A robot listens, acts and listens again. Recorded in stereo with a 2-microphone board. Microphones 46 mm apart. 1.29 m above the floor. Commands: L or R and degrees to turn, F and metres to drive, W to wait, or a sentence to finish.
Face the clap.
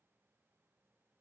W
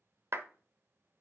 R60
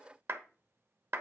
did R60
R60
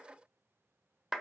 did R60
R10
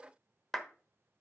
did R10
Found it: a clap, straight ahead, 1 to 2 m away.